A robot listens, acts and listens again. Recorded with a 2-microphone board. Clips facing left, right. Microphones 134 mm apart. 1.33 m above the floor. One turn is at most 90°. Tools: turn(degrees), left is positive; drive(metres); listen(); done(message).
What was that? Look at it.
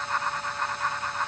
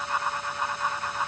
listen()
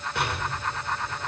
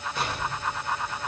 turn(degrees=65)
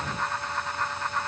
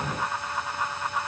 listen()
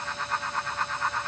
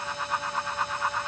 done("I heard an explosion, but can't make it out now. It was about straight ahead or 50° left.")